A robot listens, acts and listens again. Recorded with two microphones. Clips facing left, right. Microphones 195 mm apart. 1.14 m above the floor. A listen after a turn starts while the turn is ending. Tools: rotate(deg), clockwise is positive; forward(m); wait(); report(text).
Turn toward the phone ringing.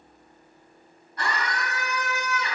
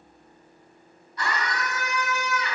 wait()
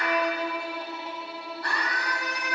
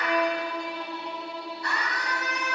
wait()
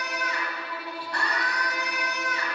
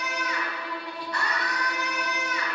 report("I can't make out a phone ringing to turn to.")